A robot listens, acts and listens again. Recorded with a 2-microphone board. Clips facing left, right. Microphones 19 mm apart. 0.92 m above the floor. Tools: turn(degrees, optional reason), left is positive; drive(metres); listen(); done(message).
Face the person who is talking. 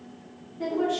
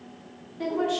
turn(degrees=-40, reason="The woman speaking: about 40° right or 140° right.")
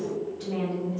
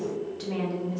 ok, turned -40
turn(degrees=-95, reason="So it is at 95° right.")
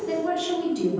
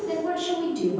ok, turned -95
done("Facing the woman speaking.")